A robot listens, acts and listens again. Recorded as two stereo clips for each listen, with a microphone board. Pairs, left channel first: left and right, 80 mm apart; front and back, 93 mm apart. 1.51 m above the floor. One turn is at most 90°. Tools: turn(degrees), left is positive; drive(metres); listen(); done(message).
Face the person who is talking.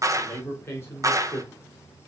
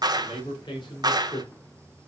turn(degrees=30)
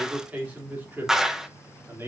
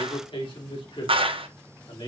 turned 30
turn(degrees=-30)
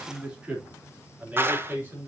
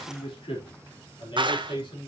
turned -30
turn(degrees=-25)
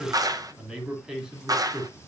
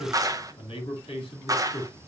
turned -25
done("Found it: a man speaking, straight ahead, 2 to 4 m away.")